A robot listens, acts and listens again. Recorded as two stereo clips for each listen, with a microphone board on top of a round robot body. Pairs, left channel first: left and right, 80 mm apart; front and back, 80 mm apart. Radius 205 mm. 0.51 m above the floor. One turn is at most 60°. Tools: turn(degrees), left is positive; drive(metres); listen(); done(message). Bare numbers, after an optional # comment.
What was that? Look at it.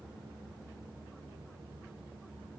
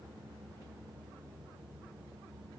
listen()
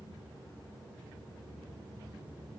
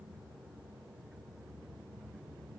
listen()
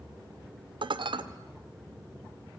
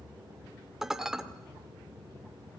# The dishes clattering: 95° right.
turn(-60)
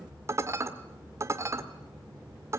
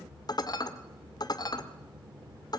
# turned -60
# The dishes clattering is now 35° right.
turn(-35)
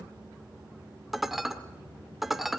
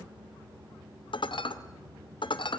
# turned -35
done("Facing the dishes clattering.")